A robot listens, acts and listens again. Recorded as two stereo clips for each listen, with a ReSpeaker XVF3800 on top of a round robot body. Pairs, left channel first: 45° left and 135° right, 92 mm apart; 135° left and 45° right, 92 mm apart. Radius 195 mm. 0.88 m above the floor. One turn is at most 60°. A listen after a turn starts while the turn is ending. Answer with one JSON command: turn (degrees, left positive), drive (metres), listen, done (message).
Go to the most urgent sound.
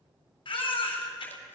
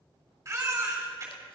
{"turn": 10}
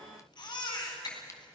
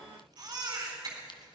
{"drive": 1.0}
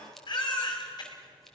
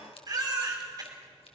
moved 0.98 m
{"drive": 1.0}
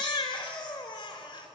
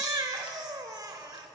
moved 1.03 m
{"drive": 1.0}
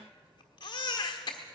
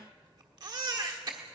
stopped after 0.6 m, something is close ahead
{"done": "Arrived at the baby crying, straight ahead."}